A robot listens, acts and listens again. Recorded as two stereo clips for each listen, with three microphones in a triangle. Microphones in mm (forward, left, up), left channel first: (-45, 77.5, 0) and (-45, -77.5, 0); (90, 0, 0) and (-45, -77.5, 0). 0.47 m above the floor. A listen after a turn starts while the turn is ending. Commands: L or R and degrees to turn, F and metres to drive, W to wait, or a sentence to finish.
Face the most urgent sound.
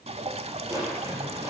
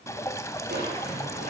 W
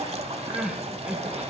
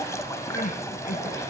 Found it: crying, straight ahead, 1 to 2 m away.